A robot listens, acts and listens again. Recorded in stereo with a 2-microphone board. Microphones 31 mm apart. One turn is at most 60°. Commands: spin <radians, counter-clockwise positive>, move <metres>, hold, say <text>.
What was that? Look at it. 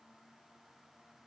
hold
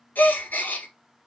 spin 1.05
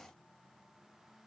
spin 0.52
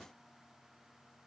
say I heard a gasp from this way, but can't make it out now.